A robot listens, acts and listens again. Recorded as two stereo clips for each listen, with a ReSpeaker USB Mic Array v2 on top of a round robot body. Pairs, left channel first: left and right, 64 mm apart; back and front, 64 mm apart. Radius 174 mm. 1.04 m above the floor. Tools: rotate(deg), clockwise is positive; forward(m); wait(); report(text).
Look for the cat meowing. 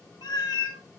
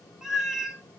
rotate(-80)
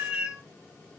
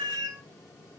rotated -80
rotate(15)
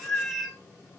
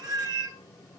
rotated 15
report("Facing the cat meowing.")